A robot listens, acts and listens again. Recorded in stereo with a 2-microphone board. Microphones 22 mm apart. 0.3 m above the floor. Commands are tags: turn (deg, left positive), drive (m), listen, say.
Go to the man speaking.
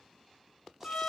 <listen/>
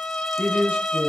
<turn deg="-55"/>
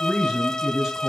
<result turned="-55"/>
<turn deg="-25"/>
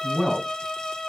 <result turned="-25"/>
<drive m="1.0"/>
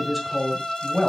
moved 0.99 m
<drive m="1.0"/>
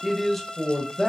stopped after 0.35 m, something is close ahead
<say>I am next to the man speaking.</say>